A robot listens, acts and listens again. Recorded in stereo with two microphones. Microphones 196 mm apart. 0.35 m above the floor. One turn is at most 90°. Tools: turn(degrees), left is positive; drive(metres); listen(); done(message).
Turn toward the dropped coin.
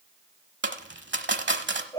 turn(degrees=-70)
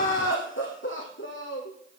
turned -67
listen()
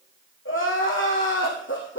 done("I heard a dropped coin, but can't make it out now. It was about straight ahead or 45° right.")